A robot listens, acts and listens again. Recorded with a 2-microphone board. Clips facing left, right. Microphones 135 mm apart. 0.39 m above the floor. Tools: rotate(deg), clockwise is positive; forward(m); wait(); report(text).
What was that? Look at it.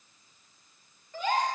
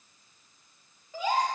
rotate(30)
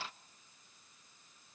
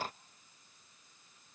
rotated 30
wait()
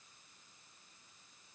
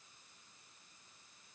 report("I heard a gasp, but can't make it out now. It was about 20° left or 140° right.")